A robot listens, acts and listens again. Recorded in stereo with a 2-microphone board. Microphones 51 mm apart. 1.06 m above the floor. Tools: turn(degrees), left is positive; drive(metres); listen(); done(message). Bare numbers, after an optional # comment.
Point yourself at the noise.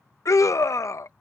# The scream: about 70° left or 110° left.
turn(70)
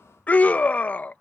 # So it is at 30° left.
turn(30)
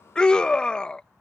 # The scream is now 15° left.
turn(15)
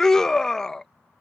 # The scream is now 10° left.
turn(10)
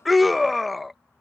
done("Facing the scream.")